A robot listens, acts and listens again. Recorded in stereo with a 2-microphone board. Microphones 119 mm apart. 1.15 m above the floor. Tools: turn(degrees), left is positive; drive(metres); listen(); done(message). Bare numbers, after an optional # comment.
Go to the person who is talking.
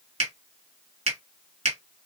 listen()
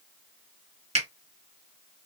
listen()
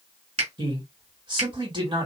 # The man speaking: about 40° right or 140° right.
turn(-40)
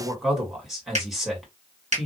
drive(1.0)
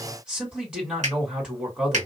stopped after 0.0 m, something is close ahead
# The man speaking is now 10° right.
turn(-10)
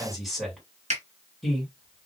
done("Something is in my way. I am facing the man speaking but have not reached it.")